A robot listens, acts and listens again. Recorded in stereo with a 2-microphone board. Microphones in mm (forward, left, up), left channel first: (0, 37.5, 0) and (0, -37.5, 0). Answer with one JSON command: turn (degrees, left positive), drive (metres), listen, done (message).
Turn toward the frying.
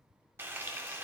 {"turn": -30}
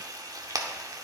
{"turn": -115}
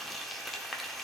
{"done": "Found it: frying, straight ahead, under 1 m away."}